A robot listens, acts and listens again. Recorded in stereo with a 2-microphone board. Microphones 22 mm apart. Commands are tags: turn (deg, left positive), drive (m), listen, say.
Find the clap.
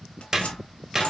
<turn deg="-25"/>
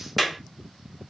<say>Facing the clap, 1 to 2 m away.</say>